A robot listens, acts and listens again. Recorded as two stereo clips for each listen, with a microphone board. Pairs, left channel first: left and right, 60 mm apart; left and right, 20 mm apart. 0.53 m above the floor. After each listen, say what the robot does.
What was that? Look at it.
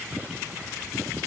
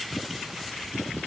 Keep listening.
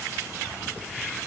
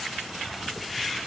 Keep listening.
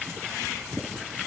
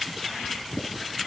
I can't make out anything.